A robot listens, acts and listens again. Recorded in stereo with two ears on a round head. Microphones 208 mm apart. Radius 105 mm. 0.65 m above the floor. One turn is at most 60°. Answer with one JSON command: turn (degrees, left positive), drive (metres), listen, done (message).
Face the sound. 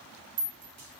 {"turn": -50}
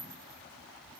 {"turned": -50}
{"listen": true}
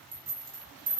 {"turn": -60}
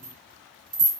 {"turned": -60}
{"turn": -35}
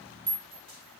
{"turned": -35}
{"turn": -25}
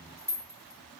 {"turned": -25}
{"turn": -10}
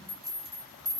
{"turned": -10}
{"done": "Facing the rattle, 1 to 2 m away."}